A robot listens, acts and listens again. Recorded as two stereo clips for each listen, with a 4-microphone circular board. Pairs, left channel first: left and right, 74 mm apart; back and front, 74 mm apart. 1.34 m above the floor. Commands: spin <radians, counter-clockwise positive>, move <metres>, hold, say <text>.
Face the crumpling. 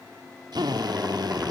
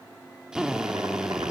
hold
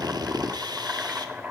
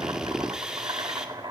hold
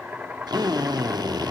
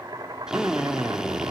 say I can't make out crumpling, only a drill and boiling.